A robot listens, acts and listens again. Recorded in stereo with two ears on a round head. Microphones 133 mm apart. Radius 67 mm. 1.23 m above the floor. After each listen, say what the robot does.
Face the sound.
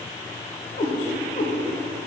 Turn 55° left.
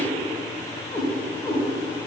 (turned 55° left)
Turn 20° left.
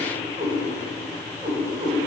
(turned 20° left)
Turn 25° right.
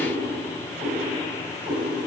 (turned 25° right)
Found it: a cat meowing, straight ahead, 2 to 4 m away.